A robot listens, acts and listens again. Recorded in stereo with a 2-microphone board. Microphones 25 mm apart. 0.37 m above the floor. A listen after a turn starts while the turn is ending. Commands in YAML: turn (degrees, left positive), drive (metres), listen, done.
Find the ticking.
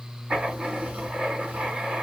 listen: true
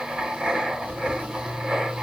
listen: true
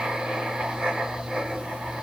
done: "I can't make out ticking, only writing."